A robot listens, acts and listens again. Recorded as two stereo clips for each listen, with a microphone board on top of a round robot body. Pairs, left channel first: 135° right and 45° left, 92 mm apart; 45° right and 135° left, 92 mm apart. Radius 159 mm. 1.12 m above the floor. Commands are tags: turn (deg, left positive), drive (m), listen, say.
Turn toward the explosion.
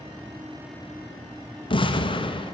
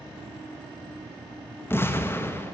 <turn deg="-110"/>
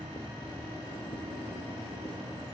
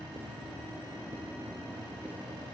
<say>I heard an explosion from this way, but can't make it out now.</say>